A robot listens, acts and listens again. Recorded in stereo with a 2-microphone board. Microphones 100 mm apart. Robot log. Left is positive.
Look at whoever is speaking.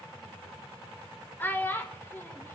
note: The child speaking: about 20° left or 160° left.
cmd yaw +20
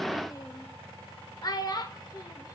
note: So it is at 135° left.
cmd yaw +135
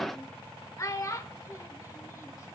note: The child speaking is now 35° left.
cmd yaw +35
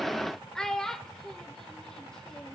end: Facing the child speaking.